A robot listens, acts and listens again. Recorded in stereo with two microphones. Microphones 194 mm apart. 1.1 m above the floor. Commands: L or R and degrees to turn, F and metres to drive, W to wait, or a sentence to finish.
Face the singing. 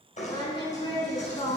L30
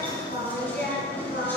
L115
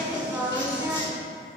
R15
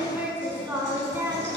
R10
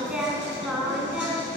Facing the singing.